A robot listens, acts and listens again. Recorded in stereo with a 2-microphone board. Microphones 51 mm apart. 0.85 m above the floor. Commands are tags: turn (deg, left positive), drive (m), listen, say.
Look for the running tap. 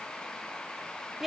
<listen/>
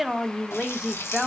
<turn deg="65"/>
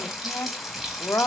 <say>Found it: a running tap, straight ahead, 2 to 4 m away.</say>